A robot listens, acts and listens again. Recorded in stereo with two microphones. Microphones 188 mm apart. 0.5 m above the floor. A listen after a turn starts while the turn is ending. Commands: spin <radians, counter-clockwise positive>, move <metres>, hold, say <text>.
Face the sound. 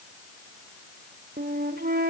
spin -1.05
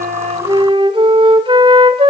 spin -0.61
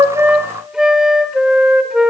say Facing the flute, 1 to 2 m away.